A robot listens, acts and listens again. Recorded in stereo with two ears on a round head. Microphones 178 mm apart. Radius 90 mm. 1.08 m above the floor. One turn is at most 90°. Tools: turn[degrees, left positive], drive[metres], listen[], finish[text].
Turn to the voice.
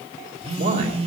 Thought: The man speaking: about 45° right or 135° right.
Action: turn[-45]
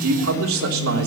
Thought: So it is at 90° right.
Action: turn[-90]
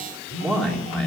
Action: finish[Found it: a man speaking, straight ahead, 2 to 4 m away.]